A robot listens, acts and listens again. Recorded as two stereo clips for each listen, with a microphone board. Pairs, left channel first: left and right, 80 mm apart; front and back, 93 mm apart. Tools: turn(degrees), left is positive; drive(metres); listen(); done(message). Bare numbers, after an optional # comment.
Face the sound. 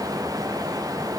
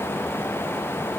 listen()
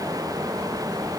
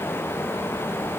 listen()
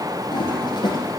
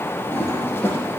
# The toilet flushing: 70° left.
turn(70)
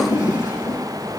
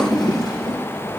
# The toilet flushing is now 40° left.
turn(40)
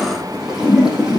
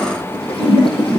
# The toilet flushing is now 10° right.
turn(-10)
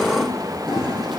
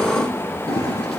done("Found it: a toilet flushing, straight ahead.")